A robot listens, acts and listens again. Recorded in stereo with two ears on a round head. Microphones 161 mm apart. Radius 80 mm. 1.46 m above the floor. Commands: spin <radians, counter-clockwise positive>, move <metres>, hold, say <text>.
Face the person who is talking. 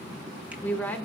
spin 0.52
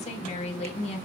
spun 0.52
spin 2.44
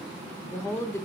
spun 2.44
spin 0.26
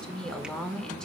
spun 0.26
say Facing the woman speaking.